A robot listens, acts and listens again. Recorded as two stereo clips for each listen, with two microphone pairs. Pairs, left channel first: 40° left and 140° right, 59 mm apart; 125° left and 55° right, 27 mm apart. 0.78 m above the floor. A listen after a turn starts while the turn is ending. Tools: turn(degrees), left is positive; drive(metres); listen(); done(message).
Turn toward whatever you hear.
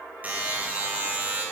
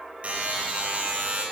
turn(degrees=-80)
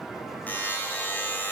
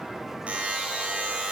turn(degrees=-20)
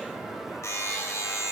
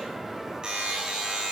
done("Facing the buzzer, 2 to 4 m away.")